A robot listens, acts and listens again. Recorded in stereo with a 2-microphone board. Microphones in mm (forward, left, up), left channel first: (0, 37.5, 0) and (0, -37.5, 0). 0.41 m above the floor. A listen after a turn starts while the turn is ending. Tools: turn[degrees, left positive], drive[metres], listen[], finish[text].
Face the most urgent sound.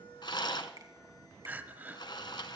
Thought: The crying: about 25° right or 155° right.
Action: turn[-25]
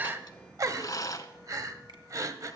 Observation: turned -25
Thought: So it is at 130° right.
Action: turn[-130]
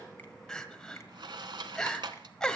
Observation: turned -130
Thought: The crying is now 10° left.
Action: turn[10]
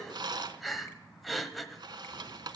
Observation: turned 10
Action: finish[Found it: crying, straight ahead, 1 to 2 m away.]